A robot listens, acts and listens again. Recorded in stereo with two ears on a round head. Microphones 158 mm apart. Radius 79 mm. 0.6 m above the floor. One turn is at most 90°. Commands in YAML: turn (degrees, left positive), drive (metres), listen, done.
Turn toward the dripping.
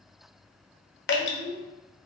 turn: 65
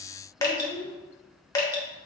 turn: 20
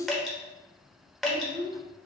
done: "Facing the dripping."